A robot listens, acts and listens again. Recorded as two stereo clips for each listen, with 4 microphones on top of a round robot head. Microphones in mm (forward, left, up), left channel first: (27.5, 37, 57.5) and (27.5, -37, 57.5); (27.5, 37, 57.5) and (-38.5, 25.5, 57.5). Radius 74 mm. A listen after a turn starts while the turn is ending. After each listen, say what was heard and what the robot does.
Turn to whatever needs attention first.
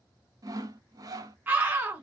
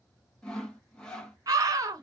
The scream: 155° right. Turn 155° right.
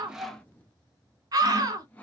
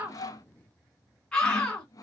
The scream is now 65° right. Turn 65° right.
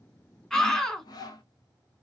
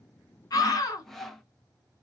The scream is now 10° left. Turn 10° left.
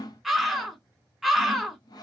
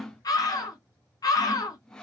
Found it: a scream, straight ahead.